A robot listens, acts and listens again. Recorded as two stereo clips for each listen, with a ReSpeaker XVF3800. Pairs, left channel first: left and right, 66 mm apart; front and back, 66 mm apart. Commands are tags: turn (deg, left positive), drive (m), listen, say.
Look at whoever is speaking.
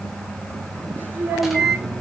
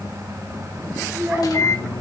<turn deg="-145"/>
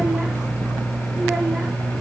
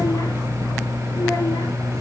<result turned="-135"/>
<turn deg="-10"/>
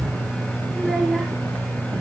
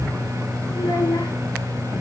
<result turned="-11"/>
<say>Found it: a child speaking, straight ahead.</say>